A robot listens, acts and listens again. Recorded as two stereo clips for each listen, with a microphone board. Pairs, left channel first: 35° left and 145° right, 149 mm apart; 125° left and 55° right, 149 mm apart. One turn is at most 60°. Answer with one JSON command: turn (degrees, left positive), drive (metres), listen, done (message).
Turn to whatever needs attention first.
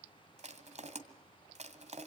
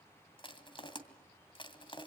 {"listen": true}
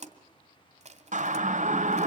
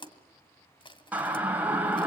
{"turn": -60}
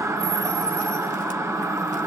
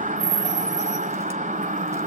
{"turn": -60}
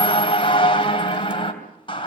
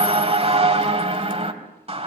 {"turn": -15}
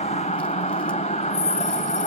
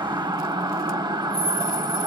{"done": "Found it: a siren, straight ahead, 2 to 4 m away."}